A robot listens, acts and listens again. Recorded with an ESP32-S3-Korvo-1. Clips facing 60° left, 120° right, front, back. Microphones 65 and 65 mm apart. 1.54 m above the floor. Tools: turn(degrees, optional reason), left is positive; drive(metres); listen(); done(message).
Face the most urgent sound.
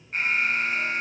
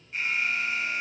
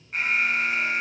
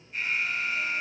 turn(degrees=20, reason="The alarm: 20° left.")
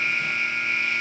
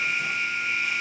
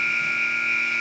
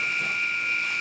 turn(degrees=10, reason="The alarm is now 10° left.")
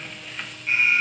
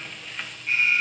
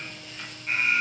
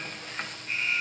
done("Facing the alarm, 1 to 2 m away.")